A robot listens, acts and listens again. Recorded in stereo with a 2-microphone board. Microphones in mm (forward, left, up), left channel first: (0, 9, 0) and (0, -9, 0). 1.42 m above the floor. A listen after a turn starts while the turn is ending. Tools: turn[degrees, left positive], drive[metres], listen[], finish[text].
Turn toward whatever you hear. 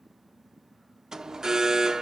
Thought: The alarm: about 35° right or 145° right.
Action: turn[-35]
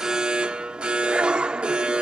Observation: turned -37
Thought: So it is at 110° right.
Action: turn[-110]
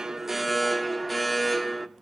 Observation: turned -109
Action: finish[Facing the alarm.]